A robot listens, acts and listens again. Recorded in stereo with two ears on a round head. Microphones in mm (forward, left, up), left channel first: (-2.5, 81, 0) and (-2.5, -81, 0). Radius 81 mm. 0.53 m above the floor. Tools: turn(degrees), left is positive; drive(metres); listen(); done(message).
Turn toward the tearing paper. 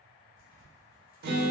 turn(degrees=50)
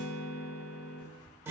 listen()
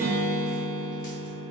listen()
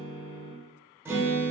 done("I heard tearing paper, but can't make it out now. It was about straight ahead or 80° left.")